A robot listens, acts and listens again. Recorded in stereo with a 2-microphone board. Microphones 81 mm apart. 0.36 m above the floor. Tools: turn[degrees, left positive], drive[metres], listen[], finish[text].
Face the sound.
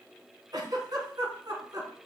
Thought: The giggle: about 55° right or 125° right.
Action: turn[-55]
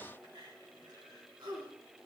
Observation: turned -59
Thought: So it is at 60° right.
Action: turn[-60]
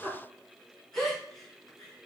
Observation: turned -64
Action: finish[Facing the giggle, 2 to 4 m away.]